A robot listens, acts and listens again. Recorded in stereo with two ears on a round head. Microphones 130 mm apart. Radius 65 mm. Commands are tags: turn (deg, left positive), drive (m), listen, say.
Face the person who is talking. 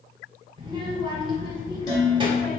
<turn deg="-35"/>
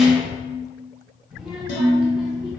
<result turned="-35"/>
<say>Facing the child speaking.</say>